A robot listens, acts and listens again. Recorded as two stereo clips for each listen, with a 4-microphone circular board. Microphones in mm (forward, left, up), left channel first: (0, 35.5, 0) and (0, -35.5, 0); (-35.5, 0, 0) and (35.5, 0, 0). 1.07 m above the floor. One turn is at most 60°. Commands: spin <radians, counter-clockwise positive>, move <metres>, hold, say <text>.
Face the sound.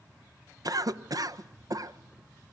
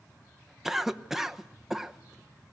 spin -1.05
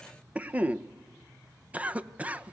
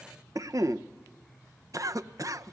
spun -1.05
spin -0.44
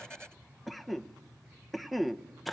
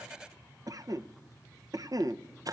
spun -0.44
say Found it: a cough, straight ahead.